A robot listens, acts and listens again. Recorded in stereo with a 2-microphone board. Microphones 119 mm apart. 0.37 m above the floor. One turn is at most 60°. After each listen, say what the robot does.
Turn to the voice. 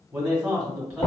Turn 30° right.
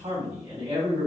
Turn 60° right.
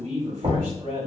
Turn 60° right.
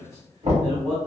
Turn 35° right.
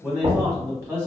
Turn 20° right.
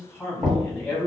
Facing the man speaking.